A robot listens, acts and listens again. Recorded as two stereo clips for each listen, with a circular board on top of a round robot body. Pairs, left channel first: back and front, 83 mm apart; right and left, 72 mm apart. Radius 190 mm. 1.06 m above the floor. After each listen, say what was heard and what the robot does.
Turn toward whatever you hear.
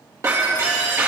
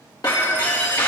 The breaking glass: 55° right. Turn 55° right.
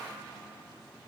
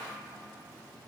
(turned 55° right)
I heard breaking glass from this way, but can't make it out now.